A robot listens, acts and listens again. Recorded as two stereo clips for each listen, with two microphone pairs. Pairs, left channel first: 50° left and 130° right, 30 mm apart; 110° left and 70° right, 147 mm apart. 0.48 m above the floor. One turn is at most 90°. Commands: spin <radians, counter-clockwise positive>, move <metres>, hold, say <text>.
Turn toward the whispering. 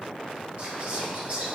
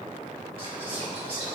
spin -1.57
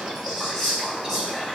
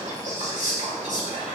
spin -0.79
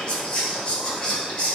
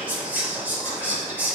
say Found it: whispering, straight ahead.